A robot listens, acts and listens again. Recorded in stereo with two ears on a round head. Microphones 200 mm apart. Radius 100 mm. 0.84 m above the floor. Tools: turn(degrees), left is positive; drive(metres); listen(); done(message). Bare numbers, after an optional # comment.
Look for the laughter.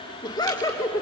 turn(30)
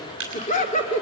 # So it is at 150° left.
turn(150)
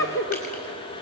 # The laughter is now 60° left.
turn(60)
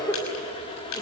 # The laughter is now 10° left.
turn(10)
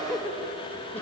# The laughter is now 10° left.
turn(10)
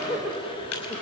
done("Facing the laughter, over 4 m away.")